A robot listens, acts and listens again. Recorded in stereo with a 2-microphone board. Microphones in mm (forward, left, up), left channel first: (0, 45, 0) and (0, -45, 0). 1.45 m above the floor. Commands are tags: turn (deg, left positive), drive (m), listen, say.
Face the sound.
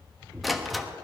<turn deg="30"/>
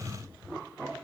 <listen/>
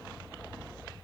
<say>I heard a door slam, but can't make it out now. It was about 30° right or 150° left.</say>